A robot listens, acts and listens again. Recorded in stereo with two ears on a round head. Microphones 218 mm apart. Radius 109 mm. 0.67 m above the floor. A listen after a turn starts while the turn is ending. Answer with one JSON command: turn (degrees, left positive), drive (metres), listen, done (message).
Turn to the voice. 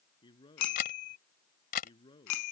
{"turn": 20}
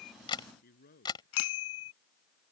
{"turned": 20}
{"turn": 140}
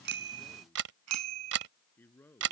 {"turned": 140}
{"turn": 10}
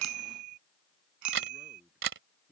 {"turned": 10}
{"done": "Facing the man speaking."}